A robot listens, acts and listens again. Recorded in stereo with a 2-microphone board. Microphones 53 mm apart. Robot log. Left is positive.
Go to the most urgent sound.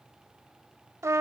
cmd idle
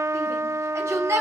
note: The shout: about 65° right or 115° right.
cmd yaw -65
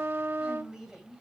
cmd idle
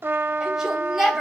note: So it is at 10° right.
cmd yaw -10
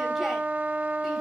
cmd idle
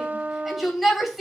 cmd fwd 1.0
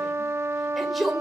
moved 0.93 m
cmd fwd 1.0
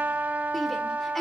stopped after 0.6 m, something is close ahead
cmd idle
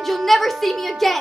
end: I am next to the shout.